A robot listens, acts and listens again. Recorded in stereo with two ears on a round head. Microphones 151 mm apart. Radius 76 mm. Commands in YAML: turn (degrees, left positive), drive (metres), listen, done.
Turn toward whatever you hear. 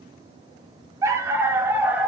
turn: -30
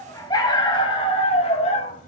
turn: 40
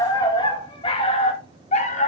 turn: 45
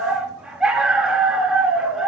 done: "Facing the dog barking."